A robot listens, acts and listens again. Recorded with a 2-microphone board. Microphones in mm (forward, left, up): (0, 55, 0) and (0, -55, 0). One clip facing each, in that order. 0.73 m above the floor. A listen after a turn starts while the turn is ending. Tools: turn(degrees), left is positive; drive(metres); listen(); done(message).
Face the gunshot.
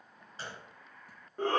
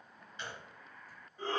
turn(degrees=35)
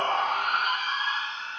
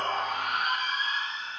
listen()
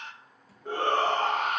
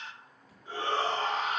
done("I heard a gunshot, but can't make it out now. It was about straight ahead or 110° left.")